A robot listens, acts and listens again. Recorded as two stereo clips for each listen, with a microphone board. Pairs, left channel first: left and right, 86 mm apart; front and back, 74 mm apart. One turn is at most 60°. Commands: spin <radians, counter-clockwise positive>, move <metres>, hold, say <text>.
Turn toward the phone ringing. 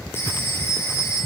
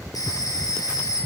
spin 0.52
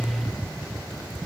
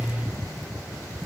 hold
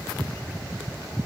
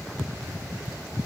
hold
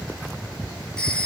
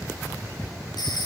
spin 0.17
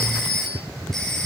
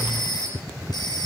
say Facing the phone ringing, over 4 m away.